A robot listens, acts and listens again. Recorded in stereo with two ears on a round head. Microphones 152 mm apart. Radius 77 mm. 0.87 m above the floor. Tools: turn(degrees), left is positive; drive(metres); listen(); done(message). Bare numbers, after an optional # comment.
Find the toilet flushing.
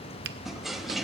turn(30)
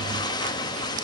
# So it is at 150° left.
turn(150)
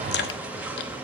# The toilet flushing is now 10° right.
turn(-10)
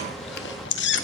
listen()
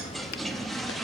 done("Facing the toilet flushing, under 1 m away.")